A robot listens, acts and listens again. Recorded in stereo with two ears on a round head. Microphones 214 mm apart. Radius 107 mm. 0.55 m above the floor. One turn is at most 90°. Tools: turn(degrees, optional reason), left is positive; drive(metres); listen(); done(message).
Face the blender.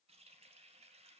listen()
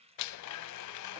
turn(degrees=90)
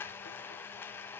turn(degrees=10, reason="So it is at 10° left.")
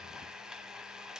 done("Found it: a blender, straight ahead.")